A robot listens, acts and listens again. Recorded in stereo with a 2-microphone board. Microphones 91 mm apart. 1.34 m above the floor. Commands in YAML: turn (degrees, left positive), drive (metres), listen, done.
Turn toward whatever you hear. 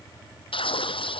turn: 75
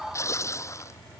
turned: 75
turn: 30
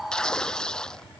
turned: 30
done: "Facing the tearing paper."